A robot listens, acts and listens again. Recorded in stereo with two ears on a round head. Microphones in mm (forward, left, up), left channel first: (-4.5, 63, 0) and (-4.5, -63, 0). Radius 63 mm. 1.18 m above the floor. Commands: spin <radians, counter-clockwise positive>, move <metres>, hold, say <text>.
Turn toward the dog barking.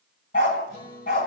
spin 1.13
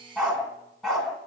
say Facing the dog barking.